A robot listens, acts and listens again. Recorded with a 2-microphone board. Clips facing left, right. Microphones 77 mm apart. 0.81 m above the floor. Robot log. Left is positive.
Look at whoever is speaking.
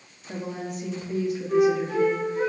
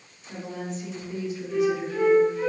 note: The woman speaking: about 55° left or 125° left.
cmd yaw +55
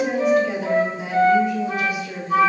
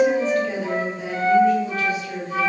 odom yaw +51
note: So it is at 15° left.
cmd yaw +15
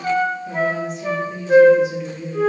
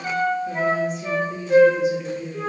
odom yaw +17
end: Facing the woman speaking.